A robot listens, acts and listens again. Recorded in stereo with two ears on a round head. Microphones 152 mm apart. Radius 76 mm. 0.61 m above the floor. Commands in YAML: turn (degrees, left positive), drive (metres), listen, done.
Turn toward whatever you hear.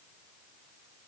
listen: true
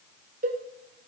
turn: -50
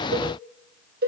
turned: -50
turn: -70
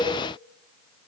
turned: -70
done: "Facing the cowbell."